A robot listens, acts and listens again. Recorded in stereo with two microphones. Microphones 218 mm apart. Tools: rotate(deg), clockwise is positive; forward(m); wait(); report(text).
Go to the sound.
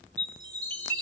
rotate(-30)
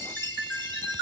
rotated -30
rotate(20)
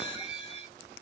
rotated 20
forward(1.0)
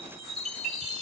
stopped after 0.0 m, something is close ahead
report("Blocked. The chime is further on, straight ahead.")